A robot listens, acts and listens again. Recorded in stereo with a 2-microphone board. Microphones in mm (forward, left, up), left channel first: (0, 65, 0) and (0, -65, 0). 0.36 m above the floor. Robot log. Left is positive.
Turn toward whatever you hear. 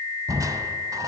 note: The crushing: about 25° right or 155° right.
cmd yaw -25
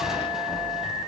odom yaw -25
cmd idle
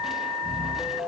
end: Found it: crushing, straight ahead, 1 to 2 m away.